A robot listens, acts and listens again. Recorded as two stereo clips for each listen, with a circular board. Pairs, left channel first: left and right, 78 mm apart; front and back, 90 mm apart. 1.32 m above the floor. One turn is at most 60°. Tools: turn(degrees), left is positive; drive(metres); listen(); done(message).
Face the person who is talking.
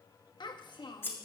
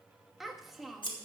turn(degrees=60)
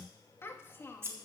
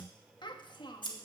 turn(degrees=30)
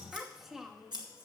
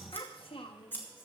done("Facing the child speaking.")